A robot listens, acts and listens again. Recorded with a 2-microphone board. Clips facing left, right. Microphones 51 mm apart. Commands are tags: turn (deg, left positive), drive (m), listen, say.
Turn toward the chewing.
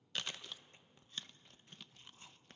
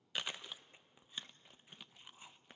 <turn deg="-30"/>
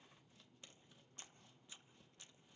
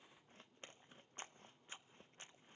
<turn deg="-140"/>
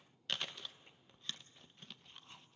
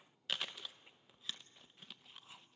<say>Facing the chewing.</say>